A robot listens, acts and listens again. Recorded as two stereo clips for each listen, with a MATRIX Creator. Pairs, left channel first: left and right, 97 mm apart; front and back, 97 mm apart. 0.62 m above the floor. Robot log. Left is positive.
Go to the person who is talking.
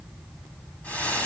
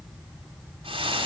cmd idle
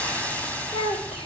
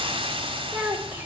note: The child speaking: 105° left.
cmd yaw +105
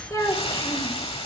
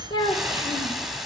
note: The child speaking is now 35° left.
cmd yaw +35
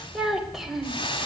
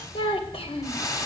cmd fwd 1.0
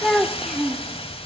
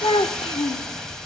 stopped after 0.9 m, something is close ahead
end: Arrived at the child speaking, straight ahead.